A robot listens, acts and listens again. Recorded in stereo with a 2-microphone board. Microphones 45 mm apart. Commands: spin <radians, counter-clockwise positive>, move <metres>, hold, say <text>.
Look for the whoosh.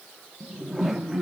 spin -0.52
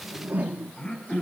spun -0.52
spin -2.53
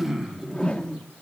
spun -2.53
spin 0.35
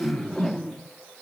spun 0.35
say Found it: a whoosh, straight ahead, 1 to 2 m away.